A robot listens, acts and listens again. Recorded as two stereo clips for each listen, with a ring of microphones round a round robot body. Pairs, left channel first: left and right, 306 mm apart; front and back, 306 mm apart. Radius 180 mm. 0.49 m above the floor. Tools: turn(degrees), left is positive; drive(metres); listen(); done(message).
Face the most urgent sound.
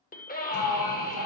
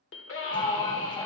turn(degrees=35)
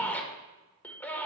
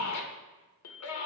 done("Facing the scream, 2 to 4 m away.")